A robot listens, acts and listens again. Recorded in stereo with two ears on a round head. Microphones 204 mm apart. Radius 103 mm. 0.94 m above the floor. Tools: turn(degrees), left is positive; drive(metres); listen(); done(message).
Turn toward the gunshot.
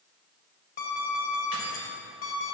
listen()
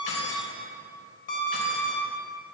listen()
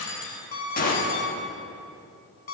turn(degrees=40)
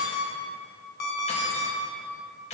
listen()
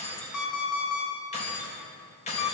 done("I heard a gunshot, but can't make it out now. It was about straight ahead or 100° left.")